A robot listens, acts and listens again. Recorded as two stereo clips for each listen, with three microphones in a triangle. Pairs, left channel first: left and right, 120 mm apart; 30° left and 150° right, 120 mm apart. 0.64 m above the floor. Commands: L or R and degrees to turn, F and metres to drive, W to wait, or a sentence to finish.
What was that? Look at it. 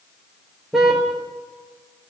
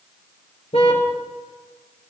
Facing the car horn, over 4 m away.